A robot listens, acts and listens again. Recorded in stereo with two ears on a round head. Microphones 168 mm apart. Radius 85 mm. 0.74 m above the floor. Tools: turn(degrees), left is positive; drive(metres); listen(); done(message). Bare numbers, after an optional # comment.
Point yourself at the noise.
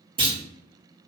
# The clunk: about 30° right or 150° right.
turn(-30)
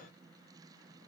listen()
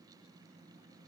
done("I heard a clunk, but can't make it out now. It was about straight ahead or 120° right.")